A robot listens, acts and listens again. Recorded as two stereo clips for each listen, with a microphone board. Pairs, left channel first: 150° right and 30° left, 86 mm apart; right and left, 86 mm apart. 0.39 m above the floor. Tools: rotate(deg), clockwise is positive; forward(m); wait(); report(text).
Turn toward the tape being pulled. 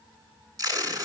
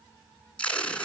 rotate(15)
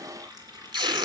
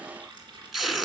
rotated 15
report("Found it: tape being pulled, straight ahead.")